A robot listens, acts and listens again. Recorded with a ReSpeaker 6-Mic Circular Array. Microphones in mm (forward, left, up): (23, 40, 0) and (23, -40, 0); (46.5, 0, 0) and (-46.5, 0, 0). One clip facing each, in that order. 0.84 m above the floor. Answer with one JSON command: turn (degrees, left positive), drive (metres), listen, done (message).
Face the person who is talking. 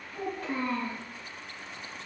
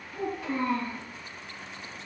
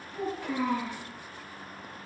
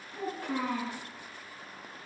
{"turn": 135}
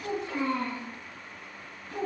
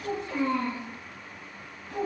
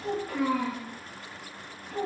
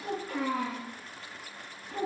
{"turn": 25}
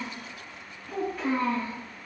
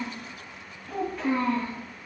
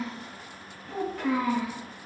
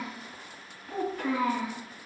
{"done": "Found it: a child speaking, straight ahead."}